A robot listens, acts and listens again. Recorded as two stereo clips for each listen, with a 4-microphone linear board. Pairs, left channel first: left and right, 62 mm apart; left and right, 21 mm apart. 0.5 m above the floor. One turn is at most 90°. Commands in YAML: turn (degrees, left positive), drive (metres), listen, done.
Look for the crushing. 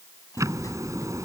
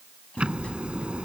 listen: true
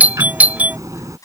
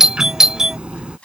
turn: 70
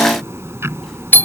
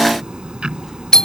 listen: true
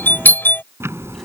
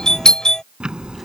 listen: true
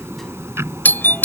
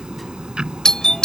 done: "I heard crushing, but can't make it out now. It was about straight ahead or 40° left."